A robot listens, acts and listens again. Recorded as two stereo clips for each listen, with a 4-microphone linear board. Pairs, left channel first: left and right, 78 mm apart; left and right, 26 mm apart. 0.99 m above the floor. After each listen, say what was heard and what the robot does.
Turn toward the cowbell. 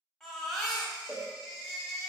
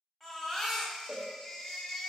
The cowbell: about 25° right or 155° right. Turn 25° right.
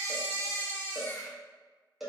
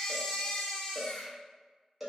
Found it: a cowbell, straight ahead.